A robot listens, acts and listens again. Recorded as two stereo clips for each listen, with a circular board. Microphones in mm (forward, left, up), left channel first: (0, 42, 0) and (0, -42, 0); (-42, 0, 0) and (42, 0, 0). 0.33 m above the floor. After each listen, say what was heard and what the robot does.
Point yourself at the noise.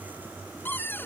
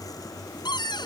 The cupboard door: 155° left. Turn 155° left.
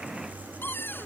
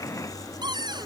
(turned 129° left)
The cupboard door is now 25° left. Turn 25° left.
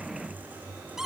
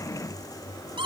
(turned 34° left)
Found it: a cupboard door, straight ahead.